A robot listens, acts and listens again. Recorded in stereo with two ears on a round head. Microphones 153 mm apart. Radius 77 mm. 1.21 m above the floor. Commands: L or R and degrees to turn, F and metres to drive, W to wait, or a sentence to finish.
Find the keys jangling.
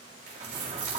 R70
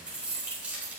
R10
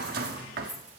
R10
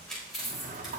Found it: keys jangling, straight ahead.